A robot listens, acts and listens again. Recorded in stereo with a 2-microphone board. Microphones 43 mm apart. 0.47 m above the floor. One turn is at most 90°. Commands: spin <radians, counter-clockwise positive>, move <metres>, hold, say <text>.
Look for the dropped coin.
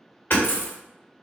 spin 1.05
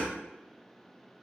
hold
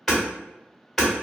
say I heard a dropped coin, but can't make it out now. It was about straight ahead or 60° left.